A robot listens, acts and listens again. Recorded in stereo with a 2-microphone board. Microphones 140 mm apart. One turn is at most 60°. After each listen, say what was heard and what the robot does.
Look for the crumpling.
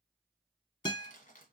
The crumpling: about 70° left or 110° left. Turn 60° left.
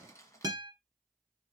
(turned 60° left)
So it is at 20° left. Turn 20° left.
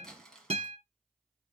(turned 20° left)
Facing the crumpling, 1 to 2 m away.